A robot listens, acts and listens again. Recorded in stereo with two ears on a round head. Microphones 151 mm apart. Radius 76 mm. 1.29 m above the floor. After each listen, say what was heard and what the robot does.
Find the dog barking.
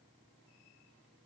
Keep listening.
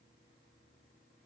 Keep listening.
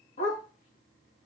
The dog barking: about 45° left or 135° left. Turn 45° left.
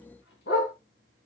So it is at 105° left. Turn 105° left.
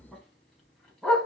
Facing the dog barking.